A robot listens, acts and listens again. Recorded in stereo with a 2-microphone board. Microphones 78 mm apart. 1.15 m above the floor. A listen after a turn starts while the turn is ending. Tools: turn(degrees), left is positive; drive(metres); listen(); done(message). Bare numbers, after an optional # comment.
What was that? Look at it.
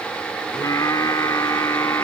# The singing: about 45° left or 135° left.
turn(45)
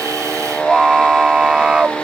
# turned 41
# So it is at 15° right.
turn(-15)
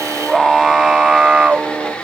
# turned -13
# The singing is now 20° right.
turn(-20)
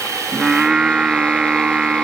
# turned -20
# The singing is now 15° right.
turn(-15)
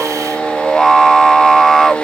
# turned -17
done("Found it: singing, straight ahead.")